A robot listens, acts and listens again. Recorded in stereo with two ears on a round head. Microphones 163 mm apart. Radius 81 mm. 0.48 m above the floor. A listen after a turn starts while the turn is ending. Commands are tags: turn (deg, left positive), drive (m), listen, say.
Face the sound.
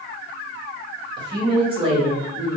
<turn deg="-35"/>
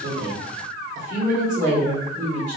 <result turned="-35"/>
<turn deg="-40"/>
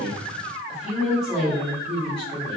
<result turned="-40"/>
<say>Found it: a woman speaking, straight ahead.</say>